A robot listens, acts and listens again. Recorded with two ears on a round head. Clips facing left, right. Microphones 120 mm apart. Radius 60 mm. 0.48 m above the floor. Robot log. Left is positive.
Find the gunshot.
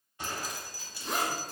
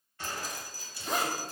note: The gunshot: about 15° left or 165° left.
cmd yaw +15
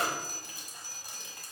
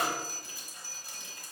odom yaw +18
cmd idle
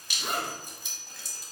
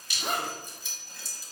end: I heard a gunshot, but can't make it out now. It was about straight ahead or 145° left.